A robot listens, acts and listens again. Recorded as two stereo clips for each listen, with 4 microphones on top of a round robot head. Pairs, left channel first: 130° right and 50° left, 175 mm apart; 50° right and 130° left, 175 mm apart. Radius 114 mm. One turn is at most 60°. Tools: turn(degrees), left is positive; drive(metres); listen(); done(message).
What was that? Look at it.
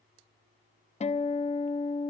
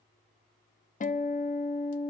turn(degrees=-60)
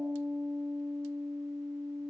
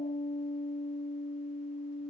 turn(degrees=-30)
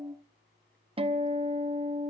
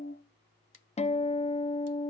done("Facing the guitar, 1 to 2 m away.")